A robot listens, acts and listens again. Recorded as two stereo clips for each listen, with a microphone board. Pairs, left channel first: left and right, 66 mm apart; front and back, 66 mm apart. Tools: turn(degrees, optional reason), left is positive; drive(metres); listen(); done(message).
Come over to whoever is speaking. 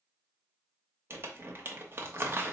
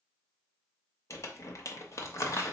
listen()
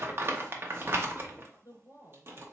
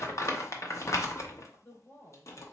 turn(degrees=55, reason="The woman speaking: 55° left.")
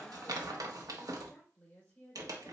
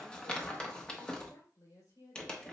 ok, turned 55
turn(degrees=20, reason="The woman speaking is now 20° left.")
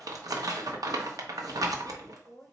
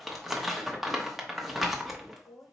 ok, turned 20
drive(metres=1.0)
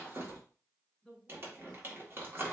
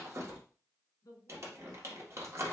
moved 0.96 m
drive(metres=1.0)
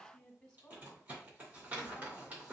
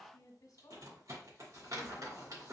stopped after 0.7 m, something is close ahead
done("Arrived at the woman speaking, straight ahead.")